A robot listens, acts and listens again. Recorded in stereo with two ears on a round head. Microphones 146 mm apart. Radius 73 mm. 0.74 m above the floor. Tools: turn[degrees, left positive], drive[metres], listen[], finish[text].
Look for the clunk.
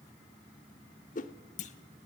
Thought: The clunk: about 45° left or 135° left.
Action: turn[45]
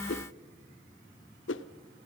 Action: listen[]
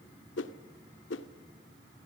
Action: finish[I heard a clunk, but can't make it out now. It was about straight ahead or 90° left.]